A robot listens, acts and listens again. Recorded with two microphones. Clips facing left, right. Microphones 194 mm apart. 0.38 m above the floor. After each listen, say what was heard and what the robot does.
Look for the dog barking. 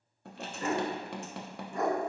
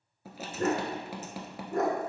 The dog barking: about 60° right or 120° right. Turn 60° right.
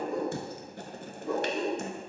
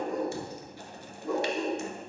Found it: a dog barking, straight ahead, 1 to 2 m away.